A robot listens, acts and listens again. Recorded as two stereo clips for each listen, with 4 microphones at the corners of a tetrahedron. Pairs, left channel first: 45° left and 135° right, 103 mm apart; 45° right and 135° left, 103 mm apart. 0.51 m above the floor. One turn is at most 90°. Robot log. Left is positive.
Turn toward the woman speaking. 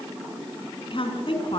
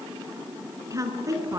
note: The woman speaking: 75° left.
cmd yaw +75
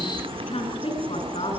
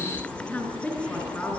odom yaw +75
note: The woman speaking is now 30° left.
cmd yaw +30
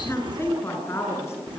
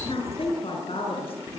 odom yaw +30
note: The woman speaking is now 20° right.
cmd yaw -20
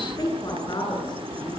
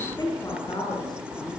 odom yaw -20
end: Facing the woman speaking, over 4 m away.